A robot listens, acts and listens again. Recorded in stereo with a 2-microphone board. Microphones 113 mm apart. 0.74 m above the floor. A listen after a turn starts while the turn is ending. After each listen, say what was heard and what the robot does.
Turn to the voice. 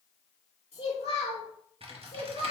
The child speaking: about 65° left or 115° left. Turn 65° left.
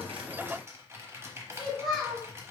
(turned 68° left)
Found it: a child speaking, straight ahead, 1 to 2 m away.